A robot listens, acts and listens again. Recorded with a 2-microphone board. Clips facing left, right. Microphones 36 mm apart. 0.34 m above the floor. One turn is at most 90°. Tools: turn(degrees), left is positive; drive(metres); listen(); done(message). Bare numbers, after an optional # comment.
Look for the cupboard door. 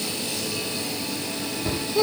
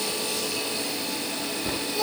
turn(30)
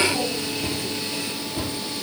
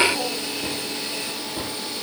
# So it is at 30° right.
turn(-30)
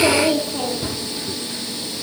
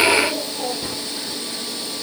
done("Found it: a cupboard door, straight ahead, over 4 m away.")